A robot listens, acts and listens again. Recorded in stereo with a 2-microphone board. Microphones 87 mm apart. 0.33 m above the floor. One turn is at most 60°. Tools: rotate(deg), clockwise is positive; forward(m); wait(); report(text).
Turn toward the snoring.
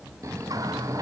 rotate(35)
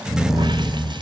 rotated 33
report("Facing the snoring.")